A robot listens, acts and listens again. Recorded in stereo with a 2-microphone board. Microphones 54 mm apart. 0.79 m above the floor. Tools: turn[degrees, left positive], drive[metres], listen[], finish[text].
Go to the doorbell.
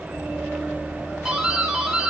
Action: turn[-30]
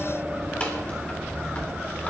Action: listen[]
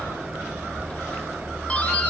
Thought: So it is at 25° left.
Action: turn[25]
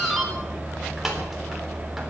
Action: drive[1.0]
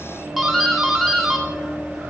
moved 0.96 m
Action: drive[1.0]
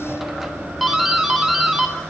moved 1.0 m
Action: drive[1.0]
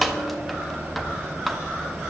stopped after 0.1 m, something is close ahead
Action: finish[I am next to the doorbell.]